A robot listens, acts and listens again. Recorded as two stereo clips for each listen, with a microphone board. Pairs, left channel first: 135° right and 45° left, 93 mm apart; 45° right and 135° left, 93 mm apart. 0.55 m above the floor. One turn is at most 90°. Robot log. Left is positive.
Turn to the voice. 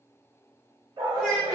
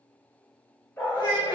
note: The child speaking: 20° right.
cmd yaw -20
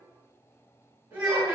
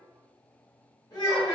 end: Found it: a child speaking, straight ahead.